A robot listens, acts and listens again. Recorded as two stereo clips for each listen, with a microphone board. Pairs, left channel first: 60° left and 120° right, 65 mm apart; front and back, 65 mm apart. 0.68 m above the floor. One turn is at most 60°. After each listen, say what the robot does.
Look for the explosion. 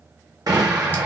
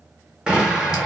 Turn 60° right.
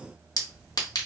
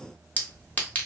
Turn 45° right.
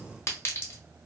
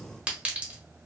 Facing where the explosion came from. I can't hear it now.